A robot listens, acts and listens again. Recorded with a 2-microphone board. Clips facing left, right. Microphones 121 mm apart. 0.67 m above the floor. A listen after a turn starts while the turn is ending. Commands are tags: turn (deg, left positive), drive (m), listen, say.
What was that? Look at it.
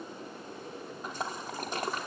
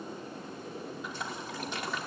<turn deg="40"/>
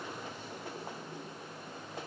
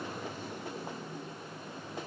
<listen/>
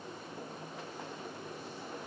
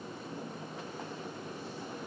<say>I heard a splash, but can't make it out now. It was about straight ahead or 100° left.</say>